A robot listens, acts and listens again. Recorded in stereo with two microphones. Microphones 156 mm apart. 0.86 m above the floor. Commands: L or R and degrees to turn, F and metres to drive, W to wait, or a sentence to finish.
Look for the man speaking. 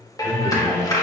L35
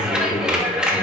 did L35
L125
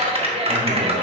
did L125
W
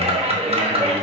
W
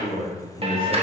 L30
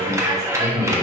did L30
Facing the man speaking, over 4 m away.